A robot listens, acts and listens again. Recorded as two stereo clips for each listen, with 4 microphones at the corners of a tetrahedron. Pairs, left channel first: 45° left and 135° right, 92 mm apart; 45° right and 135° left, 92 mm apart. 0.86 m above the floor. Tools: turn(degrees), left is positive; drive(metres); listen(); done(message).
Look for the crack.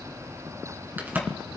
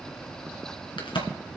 turn(degrees=-65)
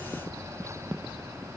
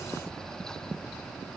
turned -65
done("I heard a crack from this way, but can't make it out now.")